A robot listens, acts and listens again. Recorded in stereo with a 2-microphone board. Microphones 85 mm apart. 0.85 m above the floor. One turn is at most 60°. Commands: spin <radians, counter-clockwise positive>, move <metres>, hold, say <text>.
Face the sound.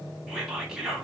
spin -0.52
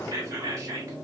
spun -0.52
spin -1.05
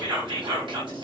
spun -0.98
spin -1.05
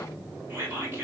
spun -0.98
spin -0.52
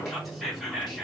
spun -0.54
say Facing the whispering.